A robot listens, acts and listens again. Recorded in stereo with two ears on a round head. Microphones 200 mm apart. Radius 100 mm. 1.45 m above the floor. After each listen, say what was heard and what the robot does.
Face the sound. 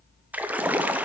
Turn 30° right.
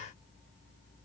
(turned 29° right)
Keep listening.
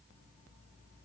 I heard a splash, but can't make it out now. It was about 20° left or 145° right.